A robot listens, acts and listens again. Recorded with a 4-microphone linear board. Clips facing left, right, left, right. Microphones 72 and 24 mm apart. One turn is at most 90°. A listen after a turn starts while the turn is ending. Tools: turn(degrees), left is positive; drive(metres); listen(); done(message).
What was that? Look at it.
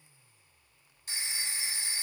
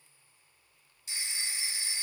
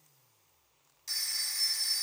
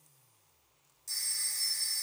turn(degrees=45)
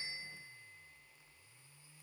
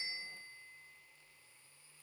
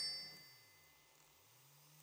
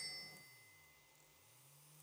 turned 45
listen()
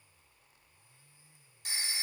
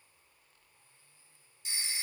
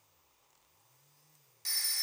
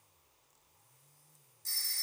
turn(degrees=85)
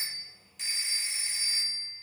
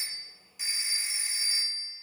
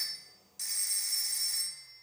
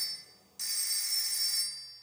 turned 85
done("Found it: a phone ringing, straight ahead, 1 to 2 m away.")